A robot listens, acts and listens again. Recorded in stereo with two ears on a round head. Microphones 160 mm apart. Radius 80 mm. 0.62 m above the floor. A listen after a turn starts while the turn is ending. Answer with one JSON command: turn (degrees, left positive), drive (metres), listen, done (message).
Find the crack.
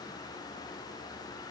{"listen": true}
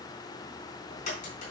{"turn": 45}
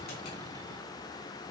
{"listen": true}
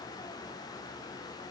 {"done": "I heard a crack, but can't make it out now. It was about straight ahead or 90° left."}